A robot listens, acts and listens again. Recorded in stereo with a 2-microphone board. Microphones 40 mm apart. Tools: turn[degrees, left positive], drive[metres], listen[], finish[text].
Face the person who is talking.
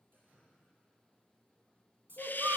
Thought: The child speaking: about 70° right or 110° right.
Action: turn[-70]
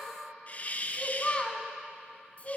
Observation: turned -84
Thought: So it is at 35° left.
Action: turn[35]
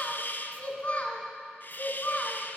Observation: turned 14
Thought: The child speaking is now 40° left.
Action: turn[40]
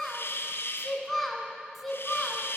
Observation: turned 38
Action: finish[Found it: a child speaking, straight ahead.]